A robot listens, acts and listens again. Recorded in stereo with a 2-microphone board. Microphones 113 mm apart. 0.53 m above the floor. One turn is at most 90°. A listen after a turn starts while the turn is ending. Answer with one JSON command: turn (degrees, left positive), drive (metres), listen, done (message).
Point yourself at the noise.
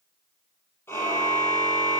{"turn": 20}
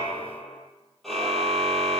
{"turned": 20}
{"done": "Found it: a car horn, straight ahead."}